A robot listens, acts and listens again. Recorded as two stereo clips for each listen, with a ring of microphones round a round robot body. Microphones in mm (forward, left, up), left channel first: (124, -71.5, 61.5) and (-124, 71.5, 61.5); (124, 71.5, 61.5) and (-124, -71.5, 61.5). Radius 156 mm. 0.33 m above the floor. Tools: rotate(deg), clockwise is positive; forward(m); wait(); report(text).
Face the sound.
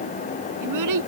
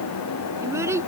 rotate(-130)
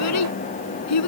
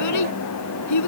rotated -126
report("Found it: a child speaking, straight ahead.")